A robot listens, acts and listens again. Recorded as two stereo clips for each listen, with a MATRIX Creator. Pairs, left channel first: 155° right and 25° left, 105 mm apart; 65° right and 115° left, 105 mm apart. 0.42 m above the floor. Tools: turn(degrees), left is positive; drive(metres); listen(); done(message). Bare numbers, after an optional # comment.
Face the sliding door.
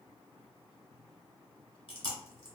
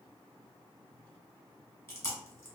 listen()
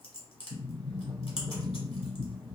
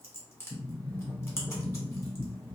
done("Facing the sliding door, under 1 m away.")